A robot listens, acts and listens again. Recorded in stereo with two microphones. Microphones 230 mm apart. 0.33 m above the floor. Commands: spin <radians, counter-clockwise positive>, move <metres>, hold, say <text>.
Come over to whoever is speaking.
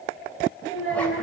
spin 1.31
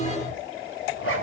hold
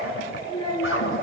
spin 0.35
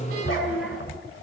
move 1.0
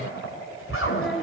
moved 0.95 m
move 1.0
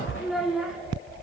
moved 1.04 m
move 1.0
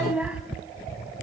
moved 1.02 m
move 1.0
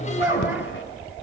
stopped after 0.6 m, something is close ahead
spin -0.26
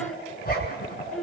say I am next to the child speaking.